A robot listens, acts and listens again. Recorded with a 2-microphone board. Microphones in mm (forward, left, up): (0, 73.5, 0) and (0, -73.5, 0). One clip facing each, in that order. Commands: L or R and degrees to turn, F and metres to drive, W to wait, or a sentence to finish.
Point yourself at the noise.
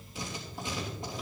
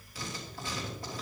L20
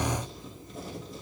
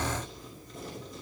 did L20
Facing the writing, 2 to 4 m away.